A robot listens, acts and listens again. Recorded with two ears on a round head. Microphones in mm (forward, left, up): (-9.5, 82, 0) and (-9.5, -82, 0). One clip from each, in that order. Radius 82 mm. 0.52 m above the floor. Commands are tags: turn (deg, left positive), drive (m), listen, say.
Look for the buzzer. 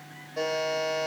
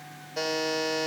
<turn deg="-55"/>
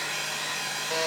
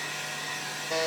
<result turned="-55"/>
<say>Found it: a buzzer, straight ahead, 1 to 2 m away.</say>